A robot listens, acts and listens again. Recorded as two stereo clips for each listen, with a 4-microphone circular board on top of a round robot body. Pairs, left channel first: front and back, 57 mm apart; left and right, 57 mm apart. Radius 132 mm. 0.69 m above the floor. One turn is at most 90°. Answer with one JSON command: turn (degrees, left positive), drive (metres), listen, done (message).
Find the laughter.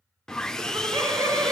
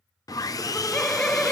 {"turn": 90}
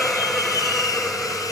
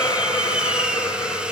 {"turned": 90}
{"turn": 85}
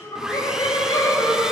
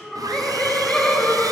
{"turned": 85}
{"turn": 15}
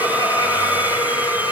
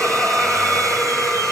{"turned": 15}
{"done": "Facing the laughter, over 4 m away."}